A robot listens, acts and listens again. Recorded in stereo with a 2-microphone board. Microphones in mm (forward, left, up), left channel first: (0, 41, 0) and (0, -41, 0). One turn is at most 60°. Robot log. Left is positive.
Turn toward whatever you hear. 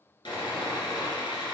note: The sawing: about 65° left or 115° left.
cmd yaw +60
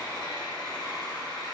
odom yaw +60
note: So it is at 55° left.
cmd yaw +55
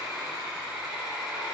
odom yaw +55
note: The sawing is now 10° right.
cmd yaw -10
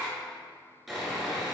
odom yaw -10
end: Found it: sawing, straight ahead.